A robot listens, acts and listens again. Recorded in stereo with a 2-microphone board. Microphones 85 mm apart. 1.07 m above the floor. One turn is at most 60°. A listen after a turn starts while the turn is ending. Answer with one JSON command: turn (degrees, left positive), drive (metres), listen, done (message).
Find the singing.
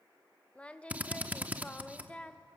{"turn": 30}
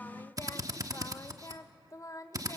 {"turn": 60}
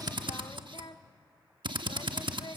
{"turn": 60}
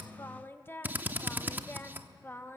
{"turn": 30}
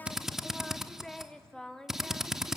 {"turn": 10}
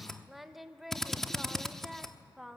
{"done": "Facing the singing."}